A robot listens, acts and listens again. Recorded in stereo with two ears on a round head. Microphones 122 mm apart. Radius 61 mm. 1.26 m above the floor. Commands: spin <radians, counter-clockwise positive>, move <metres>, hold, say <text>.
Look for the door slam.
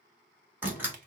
spin -0.26
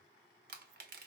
hold
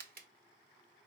say I heard a door slam, but can't make it out now. It was about straight ahead or 150° right.